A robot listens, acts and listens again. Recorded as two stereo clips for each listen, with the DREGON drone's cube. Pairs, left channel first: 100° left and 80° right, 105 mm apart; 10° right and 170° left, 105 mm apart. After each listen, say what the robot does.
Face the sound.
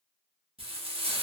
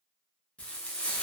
Turn 90° right.
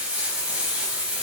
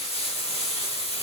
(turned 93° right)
Found it: frying, straight ahead.